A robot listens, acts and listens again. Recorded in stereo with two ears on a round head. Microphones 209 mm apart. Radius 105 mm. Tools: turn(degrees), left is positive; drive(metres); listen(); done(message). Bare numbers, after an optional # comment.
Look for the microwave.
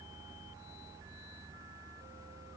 listen()
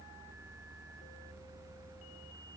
listen()
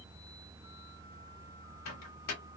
turn(90)
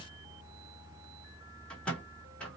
done("Facing the microwave.")